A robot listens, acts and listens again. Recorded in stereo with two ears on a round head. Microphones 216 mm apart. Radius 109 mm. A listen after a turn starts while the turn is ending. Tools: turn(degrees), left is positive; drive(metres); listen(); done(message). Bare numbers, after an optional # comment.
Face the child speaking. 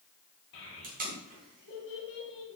# The child speaking: about 55° left or 125° left.
turn(55)
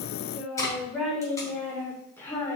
# So it is at 10° left.
turn(10)
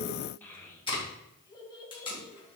# The child speaking is now 20° left.
turn(20)
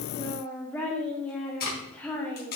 done("Found it: a child speaking, straight ahead.")